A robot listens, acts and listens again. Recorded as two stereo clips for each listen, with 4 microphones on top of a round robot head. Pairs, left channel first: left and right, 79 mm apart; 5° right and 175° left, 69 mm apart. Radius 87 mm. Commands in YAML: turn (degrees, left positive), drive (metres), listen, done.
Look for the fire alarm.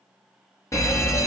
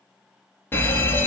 turn: 50
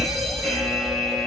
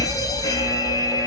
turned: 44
done: "Found it: a fire alarm, straight ahead, 2 to 4 m away."